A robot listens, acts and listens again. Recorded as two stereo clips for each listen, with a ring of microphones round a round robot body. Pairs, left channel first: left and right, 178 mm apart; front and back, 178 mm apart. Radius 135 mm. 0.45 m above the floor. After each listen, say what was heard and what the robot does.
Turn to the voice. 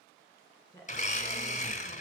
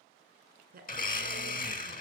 The woman speaking: 165° left. Turn 165° left.
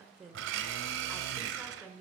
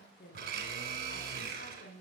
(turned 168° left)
Facing the woman speaking.